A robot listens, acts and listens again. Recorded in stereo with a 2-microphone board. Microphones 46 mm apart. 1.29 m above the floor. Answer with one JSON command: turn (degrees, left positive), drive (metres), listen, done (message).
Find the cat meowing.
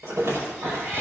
{"turn": -65}
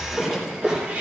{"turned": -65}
{"turn": -35}
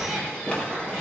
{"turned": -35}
{"turn": 10}
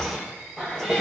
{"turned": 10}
{"done": "Found it: a cat meowing, straight ahead, over 4 m away."}